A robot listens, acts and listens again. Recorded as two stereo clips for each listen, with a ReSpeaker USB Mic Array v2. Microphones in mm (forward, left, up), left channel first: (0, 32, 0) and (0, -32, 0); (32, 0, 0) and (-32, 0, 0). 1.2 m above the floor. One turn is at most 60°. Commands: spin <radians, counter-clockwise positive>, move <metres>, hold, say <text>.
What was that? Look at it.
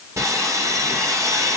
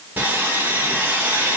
spin -1.05
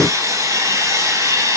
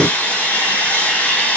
spin -1.05
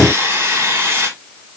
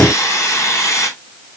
spin -0.70
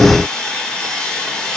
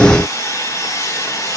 spin 0.26
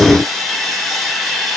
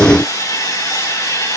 say Found it: sawing, straight ahead, over 4 m away.